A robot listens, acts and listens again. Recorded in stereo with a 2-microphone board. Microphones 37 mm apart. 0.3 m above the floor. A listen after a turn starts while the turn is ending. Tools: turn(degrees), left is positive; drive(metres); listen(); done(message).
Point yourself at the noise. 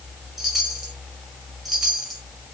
turn(degrees=30)
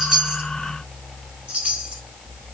turn(degrees=-30)
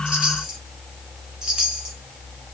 turn(degrees=-10)
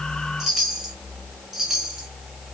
done("Facing the chime.")